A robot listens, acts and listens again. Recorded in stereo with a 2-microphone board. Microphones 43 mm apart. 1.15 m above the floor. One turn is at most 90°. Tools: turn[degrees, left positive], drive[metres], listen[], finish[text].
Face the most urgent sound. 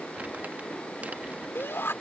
Thought: The shout: about 70° left or 110° left.
Action: turn[70]
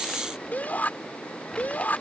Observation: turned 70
Thought: So it is at 45° left.
Action: turn[45]
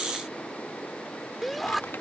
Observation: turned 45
Action: finish[Found it: a shout, straight ahead.]